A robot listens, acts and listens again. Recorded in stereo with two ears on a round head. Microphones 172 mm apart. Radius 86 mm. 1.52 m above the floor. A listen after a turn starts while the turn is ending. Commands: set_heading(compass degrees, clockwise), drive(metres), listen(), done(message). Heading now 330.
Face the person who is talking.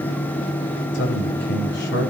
set_heading(270)
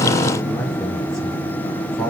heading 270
done("Found it: a man speaking, straight ahead.")